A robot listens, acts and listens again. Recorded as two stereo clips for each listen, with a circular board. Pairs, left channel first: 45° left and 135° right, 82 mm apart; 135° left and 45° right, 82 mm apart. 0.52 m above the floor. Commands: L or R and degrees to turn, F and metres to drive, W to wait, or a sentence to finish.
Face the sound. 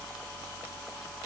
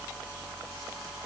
W
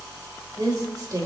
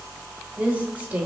R110
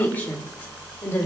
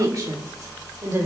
Found it: a woman speaking, straight ahead.